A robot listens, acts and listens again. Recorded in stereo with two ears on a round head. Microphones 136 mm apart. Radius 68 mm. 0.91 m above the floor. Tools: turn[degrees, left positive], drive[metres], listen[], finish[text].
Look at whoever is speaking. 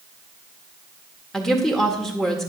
Action: turn[30]
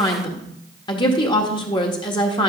Thought: So it is at 145° left.
Action: turn[145]
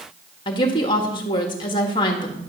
Thought: The woman speaking is now 35° left.
Action: turn[35]
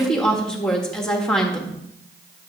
Action: finish[Found it: a woman speaking, straight ahead, 1 to 2 m away.]